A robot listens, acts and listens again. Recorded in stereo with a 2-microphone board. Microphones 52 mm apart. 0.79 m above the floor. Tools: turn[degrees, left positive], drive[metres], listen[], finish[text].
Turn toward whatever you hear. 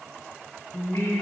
Thought: The singing: about 70° left or 110° left.
Action: turn[70]
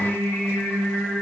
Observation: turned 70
Thought: So it is at 40° left.
Action: turn[40]
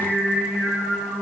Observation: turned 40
Action: finish[Found it: singing, straight ahead.]